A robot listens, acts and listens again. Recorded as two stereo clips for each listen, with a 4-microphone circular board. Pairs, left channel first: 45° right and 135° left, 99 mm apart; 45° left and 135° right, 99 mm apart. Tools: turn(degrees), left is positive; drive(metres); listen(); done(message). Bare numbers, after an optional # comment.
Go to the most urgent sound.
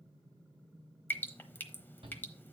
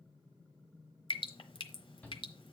# The shout: 120° left.
turn(120)
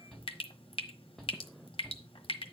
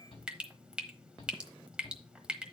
# The shout is now 40° left.
turn(40)
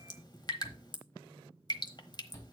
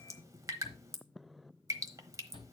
# The shout is now 15° left.
turn(15)
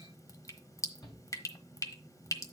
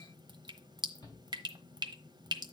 drive(1.0)
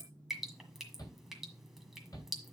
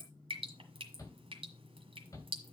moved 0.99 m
drive(1.0)
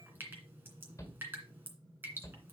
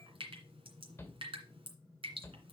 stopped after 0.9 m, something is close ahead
done("Arrived at the shout, straight ahead.")